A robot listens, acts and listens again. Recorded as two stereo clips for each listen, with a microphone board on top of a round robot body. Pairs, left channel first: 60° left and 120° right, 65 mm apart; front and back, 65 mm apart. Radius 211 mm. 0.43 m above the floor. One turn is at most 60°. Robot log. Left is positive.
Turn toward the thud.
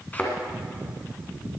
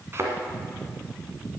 note: The thud: 125° left.
cmd yaw +60
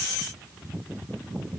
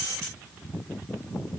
note: Nothing new. It was at 65° left.
cmd yaw +60
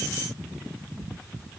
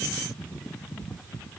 end: Facing where the thud came from. I can't hear it now.